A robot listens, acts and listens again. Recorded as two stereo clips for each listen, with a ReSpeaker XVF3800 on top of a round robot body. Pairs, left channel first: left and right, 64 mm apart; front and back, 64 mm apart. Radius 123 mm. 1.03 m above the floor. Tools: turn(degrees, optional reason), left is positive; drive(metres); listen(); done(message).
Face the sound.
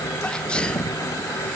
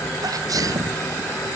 turn(degrees=165, reason="The sneeze: 165° left.")
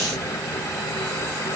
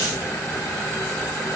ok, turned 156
turn(degrees=10, reason="Nothing new. It was at 10° left.")
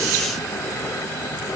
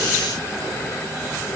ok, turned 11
done("Facing where the sneeze came from. I can't hear it now.")